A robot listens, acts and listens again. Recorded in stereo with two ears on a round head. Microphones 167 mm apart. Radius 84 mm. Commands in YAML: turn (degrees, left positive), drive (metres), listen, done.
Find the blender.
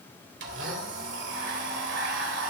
turn: -70
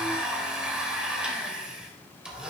done: "Found it: a blender, straight ahead."